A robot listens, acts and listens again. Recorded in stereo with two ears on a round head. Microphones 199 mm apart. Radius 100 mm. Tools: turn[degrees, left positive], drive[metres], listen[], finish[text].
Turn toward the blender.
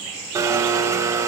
Thought: The blender: about 15° right or 165° right.
Action: turn[-15]
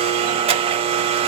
Thought: So it is at 150° right.
Action: turn[-150]
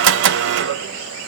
Thought: The blender is now 55° right.
Action: turn[-55]
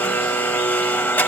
Thought: The blender is now 10° left.
Action: turn[10]
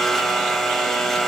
Action: finish[Facing the blender.]